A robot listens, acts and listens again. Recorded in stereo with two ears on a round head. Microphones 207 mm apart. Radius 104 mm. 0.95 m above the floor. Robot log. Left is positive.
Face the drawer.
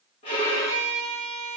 cmd idle
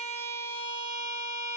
cmd idle
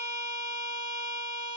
end: I can't make out a drawer to turn to.